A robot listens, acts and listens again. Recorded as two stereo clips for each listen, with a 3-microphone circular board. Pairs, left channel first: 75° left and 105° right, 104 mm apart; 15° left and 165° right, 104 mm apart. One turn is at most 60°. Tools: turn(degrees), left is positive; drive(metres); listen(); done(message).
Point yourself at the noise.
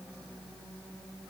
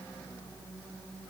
listen()
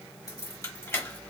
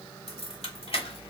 turn(degrees=10)
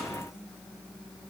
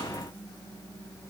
listen()
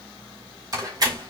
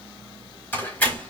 turn(degrees=-60)
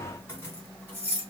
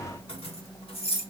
done("Facing the keys jangling, 1 to 2 m away.")